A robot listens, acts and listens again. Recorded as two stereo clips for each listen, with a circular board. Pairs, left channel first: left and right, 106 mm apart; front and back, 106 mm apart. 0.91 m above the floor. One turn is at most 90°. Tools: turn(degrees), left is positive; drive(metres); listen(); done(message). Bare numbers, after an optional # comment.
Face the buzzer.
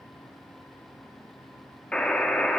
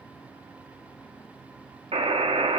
# The buzzer: 170° left.
turn(90)
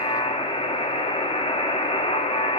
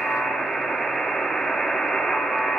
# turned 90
# The buzzer is now 85° left.
turn(85)
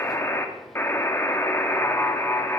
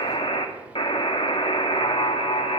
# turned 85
# The buzzer is now 25° left.
turn(25)
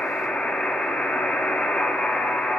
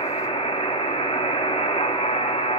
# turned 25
# The buzzer is now 10° left.
turn(10)
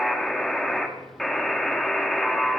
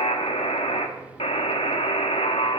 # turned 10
done("Found it: a buzzer, straight ahead.")